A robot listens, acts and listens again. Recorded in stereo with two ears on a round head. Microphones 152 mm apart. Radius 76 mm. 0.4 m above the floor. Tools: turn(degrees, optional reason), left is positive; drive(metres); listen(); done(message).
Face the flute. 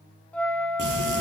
turn(degrees=30)
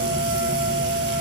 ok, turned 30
turn(degrees=-20, reason="So it is at 20° right.")
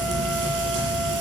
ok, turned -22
listen()
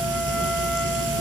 listen()
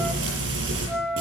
done("Found it: a flute, straight ahead, under 1 m away.")